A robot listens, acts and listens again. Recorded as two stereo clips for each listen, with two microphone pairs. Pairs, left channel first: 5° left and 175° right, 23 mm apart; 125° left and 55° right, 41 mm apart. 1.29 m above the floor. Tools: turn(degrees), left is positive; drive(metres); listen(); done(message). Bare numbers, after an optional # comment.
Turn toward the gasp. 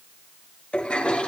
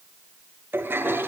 listen()
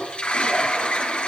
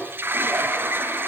listen()
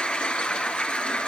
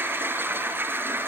done("I can't make out a gasp, only a toilet flushing.")